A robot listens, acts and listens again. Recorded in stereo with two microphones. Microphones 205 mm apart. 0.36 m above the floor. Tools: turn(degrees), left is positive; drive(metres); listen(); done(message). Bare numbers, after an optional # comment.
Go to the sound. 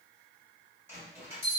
turn(-30)
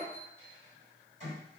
# So it is at 135° right.
turn(-135)
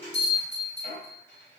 # The bell is now 15° left.
turn(15)
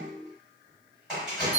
drive(1.0)
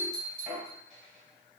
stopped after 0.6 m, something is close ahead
done("I am next to the bell.")